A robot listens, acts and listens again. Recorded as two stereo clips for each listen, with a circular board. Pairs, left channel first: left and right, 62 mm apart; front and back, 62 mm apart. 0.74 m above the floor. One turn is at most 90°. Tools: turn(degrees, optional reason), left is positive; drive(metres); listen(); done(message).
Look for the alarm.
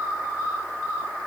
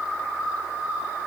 listen()
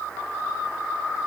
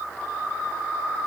listen()
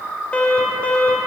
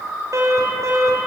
turn(degrees=90, reason="The alarm: 160° left.")
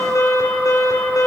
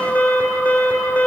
turn(degrees=65, reason="The alarm is now 65° left.")
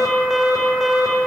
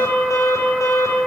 done("Found it: an alarm, straight ahead.")